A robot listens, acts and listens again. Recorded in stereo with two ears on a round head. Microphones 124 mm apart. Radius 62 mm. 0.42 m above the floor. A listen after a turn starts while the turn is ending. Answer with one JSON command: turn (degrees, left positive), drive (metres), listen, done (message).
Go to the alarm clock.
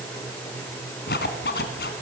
{"listen": true}
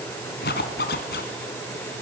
{"listen": true}
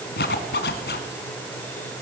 {"done": "I can't make out an alarm clock, only a zipper."}